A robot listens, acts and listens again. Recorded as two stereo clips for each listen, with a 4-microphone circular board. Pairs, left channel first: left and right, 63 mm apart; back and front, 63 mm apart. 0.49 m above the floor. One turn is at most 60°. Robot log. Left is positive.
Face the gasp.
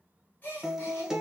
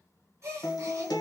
note: The gasp: 35° left.
cmd yaw +35
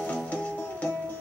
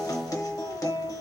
end: Facing where the gasp came from. I can't hear it now.